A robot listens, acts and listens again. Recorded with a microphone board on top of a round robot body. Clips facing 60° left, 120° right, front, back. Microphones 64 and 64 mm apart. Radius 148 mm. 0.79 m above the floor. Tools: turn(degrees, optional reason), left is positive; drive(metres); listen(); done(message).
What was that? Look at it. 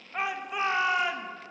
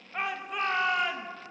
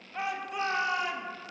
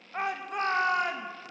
turn(degrees=145, reason="The shout: 145° left.")
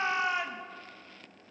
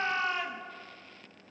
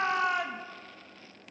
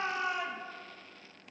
turn(degrees=-15, reason="The shout is now 15° right.")
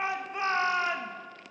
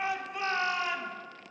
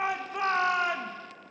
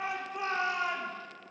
done("Found it: a shout, straight ahead, 1 to 2 m away.")